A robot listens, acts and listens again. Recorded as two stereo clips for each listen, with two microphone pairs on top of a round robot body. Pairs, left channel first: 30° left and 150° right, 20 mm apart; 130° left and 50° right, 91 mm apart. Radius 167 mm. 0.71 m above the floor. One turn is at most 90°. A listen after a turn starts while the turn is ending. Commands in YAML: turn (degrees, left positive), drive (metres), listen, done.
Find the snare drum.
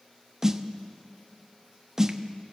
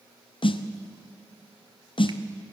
turn: 90
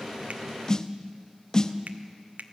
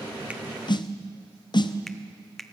turn: 90
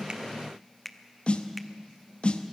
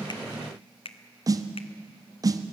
done: "Found it: a snare drum, straight ahead."